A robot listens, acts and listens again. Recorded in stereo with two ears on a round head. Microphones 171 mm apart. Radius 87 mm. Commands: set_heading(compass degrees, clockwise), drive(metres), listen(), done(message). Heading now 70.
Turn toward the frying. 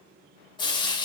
set_heading(45)
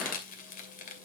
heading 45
set_heading(280)
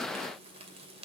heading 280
set_heading(315)
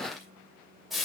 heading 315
done("Facing the frying.")